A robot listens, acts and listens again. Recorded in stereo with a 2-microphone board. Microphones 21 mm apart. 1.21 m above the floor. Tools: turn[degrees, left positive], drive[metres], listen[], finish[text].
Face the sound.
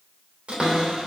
Thought: The cupboard door: about 75° right or 105° right.
Action: turn[-75]
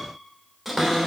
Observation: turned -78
Action: finish[Facing the cupboard door.]